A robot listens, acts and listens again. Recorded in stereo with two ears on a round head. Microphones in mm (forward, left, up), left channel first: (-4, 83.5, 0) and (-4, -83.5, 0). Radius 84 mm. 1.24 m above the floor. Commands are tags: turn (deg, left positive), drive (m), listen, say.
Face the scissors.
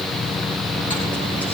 <listen/>
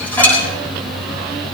<listen/>
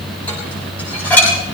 <say>I can't make out scissors, only dishes clattering.</say>